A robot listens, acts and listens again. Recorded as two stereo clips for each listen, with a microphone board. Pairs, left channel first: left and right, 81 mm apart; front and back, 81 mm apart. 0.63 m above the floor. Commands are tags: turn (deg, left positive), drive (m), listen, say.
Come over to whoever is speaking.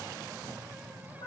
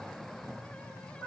<listen/>
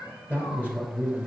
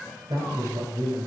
<turn deg="155"/>
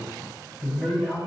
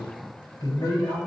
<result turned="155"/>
<drive m="1.0"/>
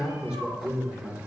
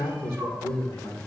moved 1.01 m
<turn deg="-10"/>
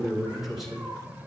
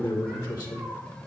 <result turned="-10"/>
<drive m="1.0"/>
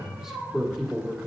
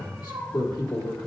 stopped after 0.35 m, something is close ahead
<say>Arrived at the man speaking, straight ahead.</say>